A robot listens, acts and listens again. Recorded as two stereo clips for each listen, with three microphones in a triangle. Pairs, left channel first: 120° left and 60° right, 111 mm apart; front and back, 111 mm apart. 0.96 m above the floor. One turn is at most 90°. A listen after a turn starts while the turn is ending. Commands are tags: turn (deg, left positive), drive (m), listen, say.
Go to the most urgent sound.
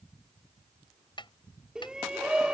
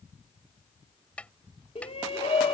<turn deg="25"/>
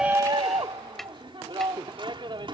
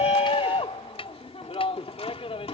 <turn deg="-20"/>
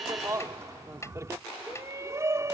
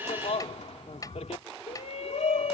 <drive m="1.0"/>
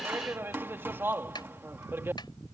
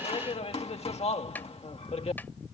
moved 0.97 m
<turn deg="10"/>
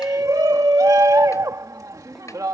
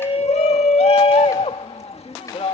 <drive m="1.0"/>
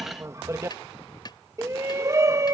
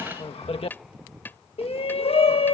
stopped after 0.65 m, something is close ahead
<say>I am next to the shout.</say>